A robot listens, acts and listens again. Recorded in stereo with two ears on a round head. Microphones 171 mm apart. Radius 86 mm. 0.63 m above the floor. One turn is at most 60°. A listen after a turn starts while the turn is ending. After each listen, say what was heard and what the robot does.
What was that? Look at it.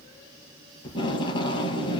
The tape being pulled: about 25° left or 155° left. Turn 25° left.
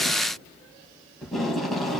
Found it: tape being pulled, straight ahead, over 4 m away.